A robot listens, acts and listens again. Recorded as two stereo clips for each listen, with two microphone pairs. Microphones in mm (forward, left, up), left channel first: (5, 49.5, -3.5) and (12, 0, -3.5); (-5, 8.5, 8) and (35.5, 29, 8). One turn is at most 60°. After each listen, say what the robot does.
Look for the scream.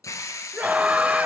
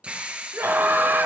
Turn 20° right.
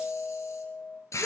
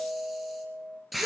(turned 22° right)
Keep listening.
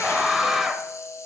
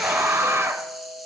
Facing the scream.